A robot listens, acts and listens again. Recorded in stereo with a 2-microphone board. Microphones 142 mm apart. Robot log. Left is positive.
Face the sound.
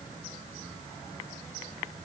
cmd idle
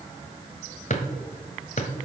note: The drawer: about 50° left or 130° left.
cmd yaw +50
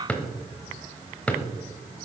note: So it is at 10° left.
cmd yaw +10
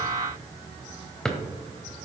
end: Found it: a drawer, straight ahead, 1 to 2 m away.